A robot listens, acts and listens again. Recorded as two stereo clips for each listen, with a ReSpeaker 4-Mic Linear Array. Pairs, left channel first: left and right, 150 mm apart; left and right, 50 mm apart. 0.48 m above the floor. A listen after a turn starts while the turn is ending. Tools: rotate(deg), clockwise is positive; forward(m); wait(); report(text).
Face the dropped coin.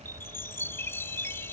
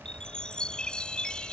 wait()
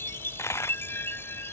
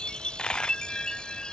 rotate(-20)
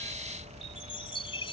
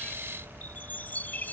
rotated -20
wait()
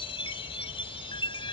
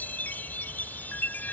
report("I heard a dropped coin, but can't make it out now. It was about straight ahead or 140° left.")